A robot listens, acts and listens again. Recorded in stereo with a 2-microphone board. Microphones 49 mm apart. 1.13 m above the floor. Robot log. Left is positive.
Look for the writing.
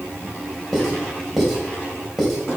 cmd yaw -30
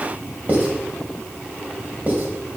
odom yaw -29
note: So it is at 145° right.
cmd yaw -145
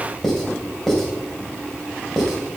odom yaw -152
note: The writing is now 10° left.
cmd yaw +10
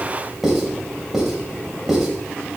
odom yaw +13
end: Facing the writing, 2 to 4 m away.